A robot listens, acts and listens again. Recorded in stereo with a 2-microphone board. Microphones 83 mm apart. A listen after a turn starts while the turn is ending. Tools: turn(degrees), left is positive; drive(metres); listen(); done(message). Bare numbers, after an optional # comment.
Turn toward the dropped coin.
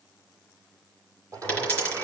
# The dropped coin: about 20° left or 160° left.
turn(20)
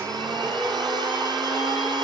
listen()
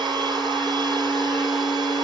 done("I heard a dropped coin, but can't make it out now. It was about straight ahead or 140° left.")